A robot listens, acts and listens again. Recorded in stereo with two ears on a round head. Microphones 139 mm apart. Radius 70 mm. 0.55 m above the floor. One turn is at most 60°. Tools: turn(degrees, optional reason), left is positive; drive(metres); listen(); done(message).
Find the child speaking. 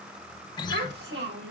turn(degrees=-60, reason="The child speaking: about 70° right or 110° right.")
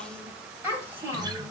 turn(degrees=-15, reason="So it is at 15° right.")
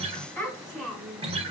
done("Found it: a child speaking, straight ahead, 2 to 4 m away.")